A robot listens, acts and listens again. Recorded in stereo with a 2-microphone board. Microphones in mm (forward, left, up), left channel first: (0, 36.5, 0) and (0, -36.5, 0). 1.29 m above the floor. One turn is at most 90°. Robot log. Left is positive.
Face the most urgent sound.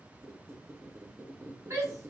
note: The shout: about 45° right or 135° right.
cmd yaw -45
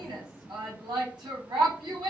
note: So it is at 90° right.
cmd yaw -90
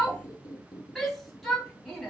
end: Found it: a shout, straight ahead.